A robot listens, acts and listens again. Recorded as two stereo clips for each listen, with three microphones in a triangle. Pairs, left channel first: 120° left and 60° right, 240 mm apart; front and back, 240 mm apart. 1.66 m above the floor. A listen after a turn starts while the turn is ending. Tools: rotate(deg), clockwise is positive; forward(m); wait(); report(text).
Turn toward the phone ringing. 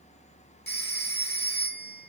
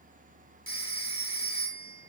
rotate(-160)
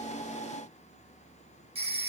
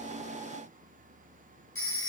report("Found it: a phone ringing, straight ahead.")